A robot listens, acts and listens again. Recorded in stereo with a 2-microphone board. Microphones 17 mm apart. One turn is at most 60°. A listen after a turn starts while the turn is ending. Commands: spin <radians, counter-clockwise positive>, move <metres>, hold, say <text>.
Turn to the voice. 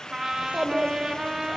spin -1.05
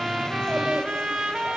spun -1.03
hold
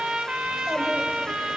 hold
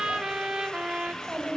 spin -0.79
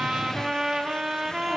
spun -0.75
hold
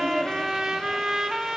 say Facing the child speaking.